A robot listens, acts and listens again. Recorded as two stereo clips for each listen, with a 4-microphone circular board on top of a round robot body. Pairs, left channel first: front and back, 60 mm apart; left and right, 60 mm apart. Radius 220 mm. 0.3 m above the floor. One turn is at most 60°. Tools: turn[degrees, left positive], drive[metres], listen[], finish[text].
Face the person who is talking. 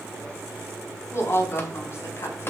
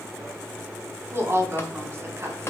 Thought: The woman speaking: 45° right.
Action: turn[-45]
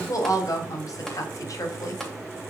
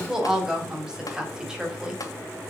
Thought: The woman speaking is now 15° right.
Action: turn[-15]
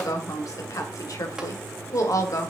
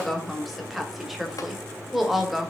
Action: finish[Found it: a woman speaking, straight ahead, 2 to 4 m away.]